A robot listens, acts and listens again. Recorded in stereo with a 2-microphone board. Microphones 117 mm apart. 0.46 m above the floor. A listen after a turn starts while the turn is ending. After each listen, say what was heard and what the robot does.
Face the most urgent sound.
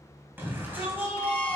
The shout: about 15° right or 165° right. Turn 15° right.
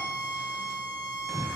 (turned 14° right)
Found it: a shout, straight ahead, 2 to 4 m away.